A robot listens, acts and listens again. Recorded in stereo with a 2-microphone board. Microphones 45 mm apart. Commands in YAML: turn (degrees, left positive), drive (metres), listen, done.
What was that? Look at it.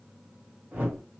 turn: -40
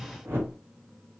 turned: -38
turn: -95
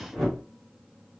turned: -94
done: "Found it: a whoosh, straight ahead, 1 to 2 m away."